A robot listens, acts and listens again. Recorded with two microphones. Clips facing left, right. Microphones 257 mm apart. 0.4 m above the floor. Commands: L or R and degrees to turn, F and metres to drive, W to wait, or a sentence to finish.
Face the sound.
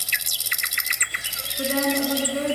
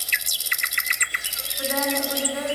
L30
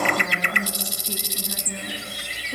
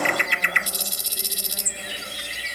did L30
W
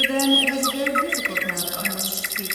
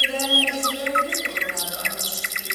L110
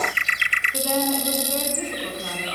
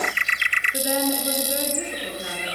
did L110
R15
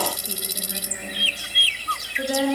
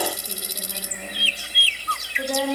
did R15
Facing the woman speaking, over 4 m away.